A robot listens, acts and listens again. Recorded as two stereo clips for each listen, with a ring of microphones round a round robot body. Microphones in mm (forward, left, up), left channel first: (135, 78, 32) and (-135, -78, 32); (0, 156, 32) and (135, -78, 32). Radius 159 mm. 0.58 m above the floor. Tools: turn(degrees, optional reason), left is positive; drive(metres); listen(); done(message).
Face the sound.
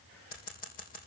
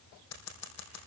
turn(degrees=95, reason="The scissors: 95° left.")
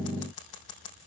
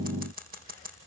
done("Facing the scissors, over 4 m away.")